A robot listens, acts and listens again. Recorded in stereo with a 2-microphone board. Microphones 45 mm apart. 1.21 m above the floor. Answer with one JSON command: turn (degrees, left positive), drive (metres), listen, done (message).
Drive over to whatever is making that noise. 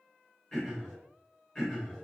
{"turn": 20}
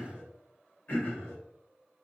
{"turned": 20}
{"turn": 135}
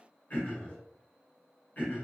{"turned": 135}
{"turn": 35}
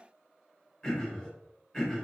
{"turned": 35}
{"drive": 1.0}
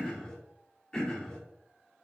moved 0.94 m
{"turn": 15}
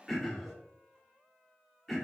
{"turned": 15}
{"drive": 1.0}
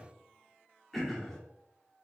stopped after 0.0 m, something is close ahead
{"done": "I am next to the throat clearing."}